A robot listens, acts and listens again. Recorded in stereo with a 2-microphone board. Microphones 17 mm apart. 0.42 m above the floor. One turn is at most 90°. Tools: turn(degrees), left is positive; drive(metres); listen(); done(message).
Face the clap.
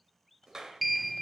turn(degrees=-40)
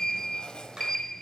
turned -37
turn(degrees=-90)
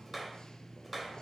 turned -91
done("Facing the clap.")